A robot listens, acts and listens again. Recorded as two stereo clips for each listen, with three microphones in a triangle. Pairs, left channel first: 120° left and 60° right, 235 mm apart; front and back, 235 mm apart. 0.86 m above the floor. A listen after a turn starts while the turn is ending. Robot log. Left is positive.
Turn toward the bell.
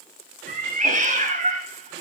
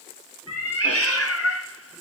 cmd idle
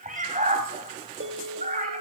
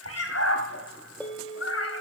note: The bell: 80° right.
cmd yaw -80
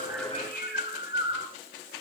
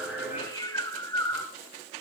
cmd idle
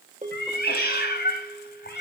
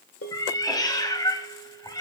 end: Found it: a bell, straight ahead, 2 to 4 m away.